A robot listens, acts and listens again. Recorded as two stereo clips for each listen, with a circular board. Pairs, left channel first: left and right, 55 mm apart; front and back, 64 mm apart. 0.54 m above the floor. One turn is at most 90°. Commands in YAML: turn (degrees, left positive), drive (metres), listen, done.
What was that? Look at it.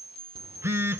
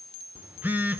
turn: -90
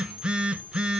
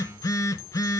turn: -20
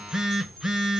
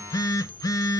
turn: -10
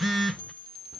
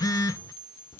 done: "Found it: a phone buzzing, straight ahead."